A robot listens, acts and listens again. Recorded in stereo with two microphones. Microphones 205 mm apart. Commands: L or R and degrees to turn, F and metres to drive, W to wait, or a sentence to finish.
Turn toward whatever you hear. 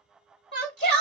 L55
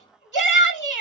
L45
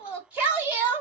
R10
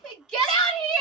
Facing the shout.